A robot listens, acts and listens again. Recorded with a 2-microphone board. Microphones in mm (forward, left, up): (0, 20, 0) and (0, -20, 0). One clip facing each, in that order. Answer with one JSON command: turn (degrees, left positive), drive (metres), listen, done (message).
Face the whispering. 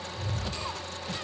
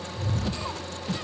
{"listen": true}
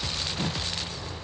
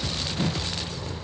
{"listen": true}
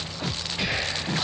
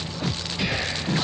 {"turn": 50}
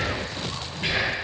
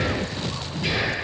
{"turn": 65}
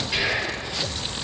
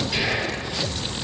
{"turn": 20}
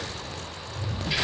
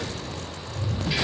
{"done": "Found it: whispering, straight ahead."}